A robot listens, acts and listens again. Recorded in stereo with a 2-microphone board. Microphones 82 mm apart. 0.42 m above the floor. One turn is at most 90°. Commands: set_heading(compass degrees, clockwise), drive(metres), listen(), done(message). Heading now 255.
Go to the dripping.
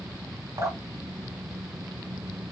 set_heading(300)
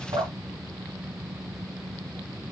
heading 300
set_heading(25)
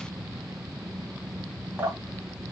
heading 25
set_heading(55)
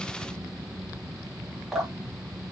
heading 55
drive(1.0)
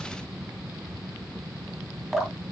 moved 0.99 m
drive(1.0)
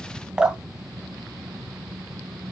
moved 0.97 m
set_heading(70)
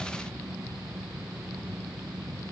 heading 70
listen()
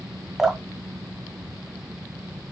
drive(1.0)
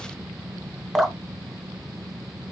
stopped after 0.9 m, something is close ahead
done("I am next to the dripping.")